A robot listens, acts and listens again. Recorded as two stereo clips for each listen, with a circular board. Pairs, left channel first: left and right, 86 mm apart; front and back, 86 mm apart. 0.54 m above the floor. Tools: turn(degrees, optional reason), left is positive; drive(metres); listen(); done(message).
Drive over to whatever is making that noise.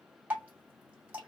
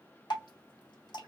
turn(degrees=-20, reason="The dripping: 20° right.")
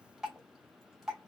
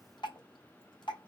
drive(metres=1.0)
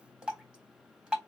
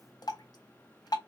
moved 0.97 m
turn(degrees=-15, reason="The dripping is now 15° right.")
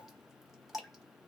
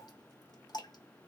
drive(metres=1.0)
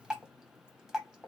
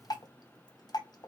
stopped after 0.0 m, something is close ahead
done("Arrived at the dripping, straight ahead.")